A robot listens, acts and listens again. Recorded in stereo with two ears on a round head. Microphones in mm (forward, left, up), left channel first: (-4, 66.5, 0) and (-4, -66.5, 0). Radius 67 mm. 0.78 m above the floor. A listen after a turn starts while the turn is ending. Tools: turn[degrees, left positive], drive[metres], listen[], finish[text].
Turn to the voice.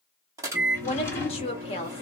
Thought: The woman speaking: about 40° left or 140° left.
Action: turn[40]
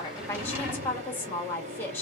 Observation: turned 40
Thought: So it is at 15° left.
Action: turn[15]
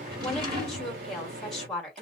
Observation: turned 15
Action: finish[Facing the woman speaking, 1 to 2 m away.]